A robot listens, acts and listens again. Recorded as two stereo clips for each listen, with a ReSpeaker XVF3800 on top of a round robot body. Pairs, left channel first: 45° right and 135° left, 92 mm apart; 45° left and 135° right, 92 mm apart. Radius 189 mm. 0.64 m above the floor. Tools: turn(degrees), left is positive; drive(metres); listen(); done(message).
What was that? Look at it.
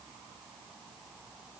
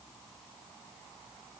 listen()
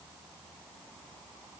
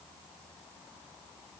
listen()
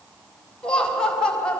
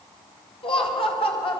turn(degrees=35)
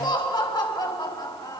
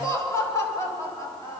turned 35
turn(degrees=-10)
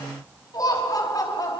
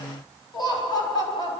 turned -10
done("Found it: laughter, straight ahead.")